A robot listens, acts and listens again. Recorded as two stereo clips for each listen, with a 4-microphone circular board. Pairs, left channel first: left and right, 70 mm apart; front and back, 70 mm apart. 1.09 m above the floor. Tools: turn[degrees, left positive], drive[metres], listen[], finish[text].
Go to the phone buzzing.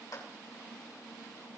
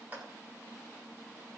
Action: listen[]
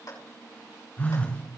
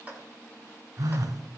Thought: The phone buzzing: 155° left.
Action: turn[155]
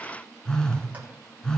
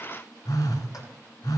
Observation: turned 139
Thought: The phone buzzing is now 15° left.
Action: turn[15]
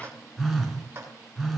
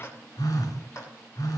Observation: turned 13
Action: drive[1.0]
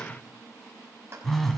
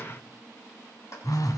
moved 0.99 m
Action: drive[1.0]
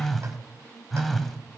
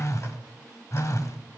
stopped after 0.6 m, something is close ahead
Action: finish[I am next to the phone buzzing.]